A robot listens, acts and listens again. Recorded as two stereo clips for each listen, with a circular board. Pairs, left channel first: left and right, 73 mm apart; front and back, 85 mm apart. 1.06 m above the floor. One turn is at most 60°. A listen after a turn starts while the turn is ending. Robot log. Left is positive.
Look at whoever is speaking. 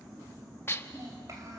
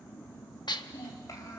note: The child speaking: 45° right.
cmd yaw -45
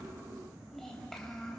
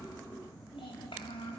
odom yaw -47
end: Facing the child speaking, over 4 m away.